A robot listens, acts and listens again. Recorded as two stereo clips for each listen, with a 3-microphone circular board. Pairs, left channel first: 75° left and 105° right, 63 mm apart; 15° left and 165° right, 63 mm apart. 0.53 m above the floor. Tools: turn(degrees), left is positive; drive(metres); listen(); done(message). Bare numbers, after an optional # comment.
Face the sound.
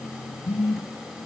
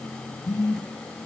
done("Found it: a phone buzzing, straight ahead.")